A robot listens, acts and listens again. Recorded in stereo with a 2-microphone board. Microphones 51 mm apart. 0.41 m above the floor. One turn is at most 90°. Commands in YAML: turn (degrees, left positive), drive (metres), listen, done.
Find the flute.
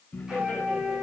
turn: -15
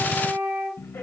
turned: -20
turn: -90
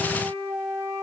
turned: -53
turn: -90
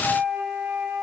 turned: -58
turn: -30
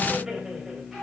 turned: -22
turn: -10
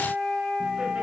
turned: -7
done: "Found it: a flute, straight ahead, over 4 m away."